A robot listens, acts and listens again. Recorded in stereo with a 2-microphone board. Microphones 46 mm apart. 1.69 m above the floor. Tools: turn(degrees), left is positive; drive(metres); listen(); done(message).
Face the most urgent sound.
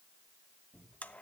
listen()
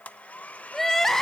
turn(degrees=30)
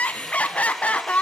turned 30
turn(degrees=145)
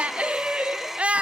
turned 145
turn(degrees=-30)
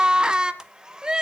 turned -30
turn(degrees=-20)
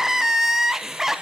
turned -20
turn(degrees=-10)
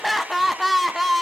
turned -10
done("Facing the crying, under 1 m away.")